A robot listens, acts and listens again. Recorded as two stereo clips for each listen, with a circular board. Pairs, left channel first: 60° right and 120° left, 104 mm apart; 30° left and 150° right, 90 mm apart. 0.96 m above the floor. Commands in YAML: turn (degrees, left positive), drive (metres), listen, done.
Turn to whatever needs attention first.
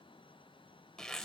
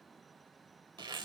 listen: true
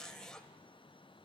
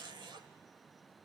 listen: true
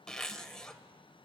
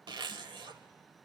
done: "I can't make out anything urgent to turn to."